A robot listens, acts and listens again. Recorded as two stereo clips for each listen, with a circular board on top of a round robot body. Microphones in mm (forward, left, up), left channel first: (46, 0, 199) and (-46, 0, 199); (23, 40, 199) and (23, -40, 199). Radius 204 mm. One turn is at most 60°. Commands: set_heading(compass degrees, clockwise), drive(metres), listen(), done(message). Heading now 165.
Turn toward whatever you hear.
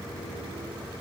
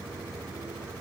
listen()
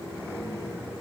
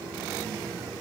listen()
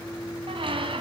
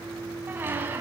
set_heading(225)
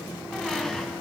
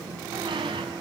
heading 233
set_heading(293)
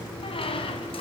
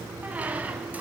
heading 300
set_heading(320)
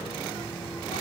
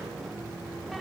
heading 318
listen()
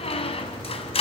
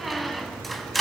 done("Found it: a squeak, straight ahead.")